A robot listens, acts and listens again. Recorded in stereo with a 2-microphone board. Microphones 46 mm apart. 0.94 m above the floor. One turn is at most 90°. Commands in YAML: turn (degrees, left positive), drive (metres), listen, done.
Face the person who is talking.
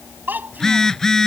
turn: -45
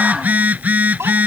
turn: -90
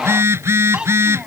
turn: -20
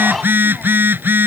listen: true
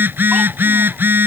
listen: true
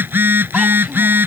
done: "I heard a child speaking from this way, but can't make it out now."